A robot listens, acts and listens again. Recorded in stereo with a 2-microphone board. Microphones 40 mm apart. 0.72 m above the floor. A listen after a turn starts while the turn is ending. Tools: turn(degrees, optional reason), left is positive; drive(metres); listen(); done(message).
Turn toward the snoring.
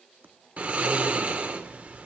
turn(degrees=-35, reason="The snoring: about 35° right or 145° right.")
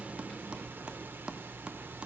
turn(degrees=-110, reason="So it is at 110° right.")
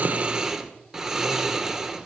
turn(degrees=-15, reason="The snoring is now 15° right.")
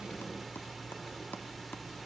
done("Found it: snoring, straight ahead.")